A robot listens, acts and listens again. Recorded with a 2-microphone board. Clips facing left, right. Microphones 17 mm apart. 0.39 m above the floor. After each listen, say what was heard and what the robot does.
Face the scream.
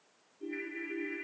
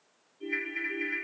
Keep listening.
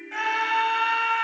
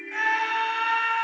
The scream: about 20° left or 160° left. Turn 20° left.
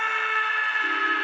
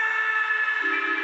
So it is at 130° left. Turn 130° left.
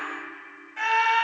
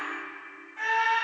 The scream is now 40° left. Turn 40° left.
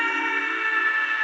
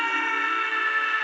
The scream is now 20° right. Turn 20° right.
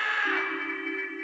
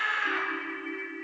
Found it: a scream, straight ahead.